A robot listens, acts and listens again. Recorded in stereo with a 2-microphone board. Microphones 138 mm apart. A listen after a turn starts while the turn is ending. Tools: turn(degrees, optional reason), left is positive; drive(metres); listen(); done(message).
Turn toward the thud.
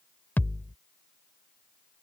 turn(degrees=30)
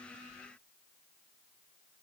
listen()
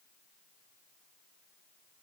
done("I heard a thud, but can't make it out now. It was about 15° right or 135° left.")